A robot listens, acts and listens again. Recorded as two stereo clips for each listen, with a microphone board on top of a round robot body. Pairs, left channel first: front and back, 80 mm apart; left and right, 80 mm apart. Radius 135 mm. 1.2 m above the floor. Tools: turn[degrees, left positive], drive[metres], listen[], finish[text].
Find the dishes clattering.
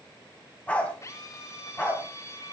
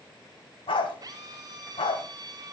Action: listen[]
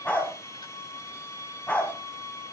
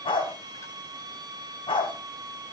Action: listen[]
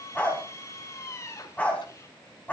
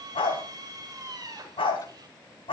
Action: finish[I can't make out dishes clattering, only a dog barking and a drill.]